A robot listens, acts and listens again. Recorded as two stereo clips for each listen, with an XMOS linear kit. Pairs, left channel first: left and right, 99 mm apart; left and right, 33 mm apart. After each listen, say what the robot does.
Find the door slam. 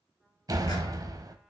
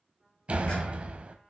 Turn 40° right.
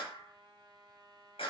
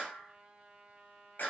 Keep listening.
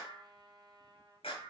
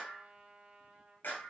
I heard a door slam, but can't make it out now. It was about straight ahead or 100° right.